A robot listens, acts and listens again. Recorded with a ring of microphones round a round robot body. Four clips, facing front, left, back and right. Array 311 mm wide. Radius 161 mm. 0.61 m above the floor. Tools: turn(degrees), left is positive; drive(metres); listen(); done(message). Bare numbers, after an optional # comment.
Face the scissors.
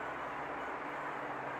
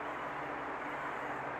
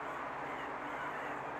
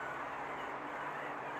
listen()
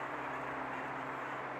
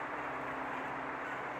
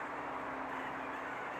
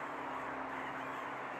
listen()
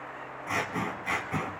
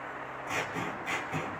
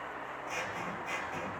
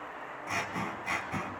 # The scissors: 15° right.
turn(-15)
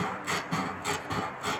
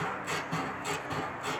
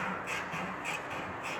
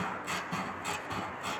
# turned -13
done("Found it: scissors, straight ahead, 1 to 2 m away.")